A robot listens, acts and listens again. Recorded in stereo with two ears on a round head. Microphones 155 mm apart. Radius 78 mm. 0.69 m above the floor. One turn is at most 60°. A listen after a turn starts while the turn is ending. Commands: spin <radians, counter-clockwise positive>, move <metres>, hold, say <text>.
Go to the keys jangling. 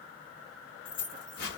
spin 0.96
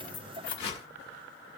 spin 1.05
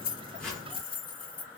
spin 0.52
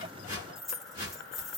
move 1.0
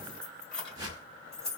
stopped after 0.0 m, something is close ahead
say Blocked. The keys jangling is further on, straight ahead.